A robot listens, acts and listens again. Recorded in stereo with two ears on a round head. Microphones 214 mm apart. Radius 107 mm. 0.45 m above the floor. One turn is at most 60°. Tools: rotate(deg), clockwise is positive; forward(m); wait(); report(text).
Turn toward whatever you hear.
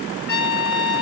rotate(-45)
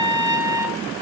rotate(-60)
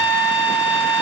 rotate(-55)
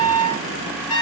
report("Facing the trumpet, 2 to 4 m away.")